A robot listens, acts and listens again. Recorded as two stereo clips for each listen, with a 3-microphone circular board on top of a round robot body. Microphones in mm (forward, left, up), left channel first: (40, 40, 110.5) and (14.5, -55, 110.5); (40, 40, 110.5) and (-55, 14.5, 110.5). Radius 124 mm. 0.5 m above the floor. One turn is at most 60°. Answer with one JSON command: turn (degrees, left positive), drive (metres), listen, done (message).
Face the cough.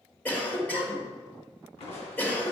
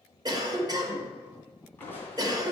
{"turn": 60}
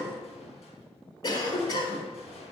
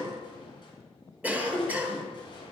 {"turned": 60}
{"turn": 60}
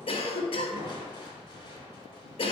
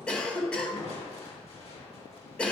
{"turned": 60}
{"turn": 60}
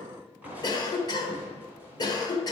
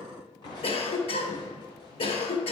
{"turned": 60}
{"turn": 30}
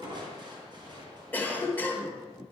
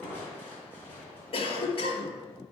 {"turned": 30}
{"done": "Facing the cough."}